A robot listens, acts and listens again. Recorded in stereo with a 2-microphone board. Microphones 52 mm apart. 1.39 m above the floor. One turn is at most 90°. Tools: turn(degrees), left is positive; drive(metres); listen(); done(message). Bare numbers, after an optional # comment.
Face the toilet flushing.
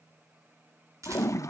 turn(90)
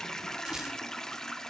# So it is at 10° left.
turn(10)
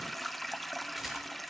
done("Found it: a toilet flushing, straight ahead, 1 to 2 m away.")